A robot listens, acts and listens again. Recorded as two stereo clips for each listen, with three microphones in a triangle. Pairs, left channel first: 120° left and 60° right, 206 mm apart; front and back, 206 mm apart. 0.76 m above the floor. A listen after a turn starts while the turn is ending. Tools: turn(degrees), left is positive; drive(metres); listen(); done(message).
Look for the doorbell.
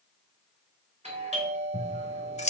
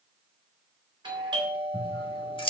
turn(degrees=-115)
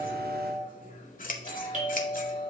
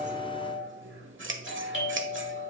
turn(degrees=-10)
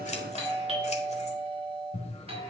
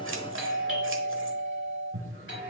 done("Found it: a doorbell, straight ahead.")